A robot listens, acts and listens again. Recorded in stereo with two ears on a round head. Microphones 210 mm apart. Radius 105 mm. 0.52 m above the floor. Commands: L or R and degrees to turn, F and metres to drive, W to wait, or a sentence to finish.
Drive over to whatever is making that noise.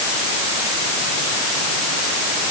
W
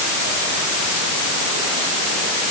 W
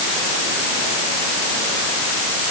I can't make out anything to turn to.